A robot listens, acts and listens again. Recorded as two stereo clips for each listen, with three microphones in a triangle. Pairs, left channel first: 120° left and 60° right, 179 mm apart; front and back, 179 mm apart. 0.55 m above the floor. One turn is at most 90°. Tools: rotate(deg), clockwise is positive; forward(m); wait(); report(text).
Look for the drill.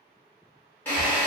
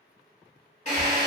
rotate(-45)
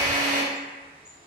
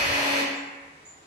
rotate(-10)
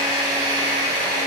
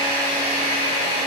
report("Found it: a drill, straight ahead.")